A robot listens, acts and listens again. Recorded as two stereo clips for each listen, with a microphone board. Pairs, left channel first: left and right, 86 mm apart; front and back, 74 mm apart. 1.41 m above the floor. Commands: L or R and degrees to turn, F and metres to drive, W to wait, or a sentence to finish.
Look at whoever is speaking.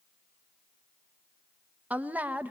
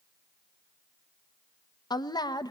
R20
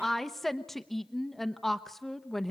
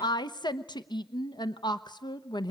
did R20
Facing the woman speaking.